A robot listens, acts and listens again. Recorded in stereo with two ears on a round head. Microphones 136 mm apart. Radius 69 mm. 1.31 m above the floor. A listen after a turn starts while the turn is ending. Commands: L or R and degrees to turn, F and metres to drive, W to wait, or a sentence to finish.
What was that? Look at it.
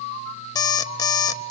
L25
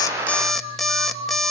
Found it: an alarm clock, straight ahead, under 1 m away.